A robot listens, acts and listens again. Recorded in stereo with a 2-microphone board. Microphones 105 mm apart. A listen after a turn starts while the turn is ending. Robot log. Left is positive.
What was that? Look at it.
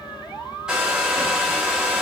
cmd yaw -30
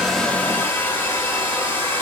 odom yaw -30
note: So it is at 20° left.
cmd yaw +20
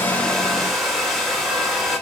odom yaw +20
end: Facing the hair dryer.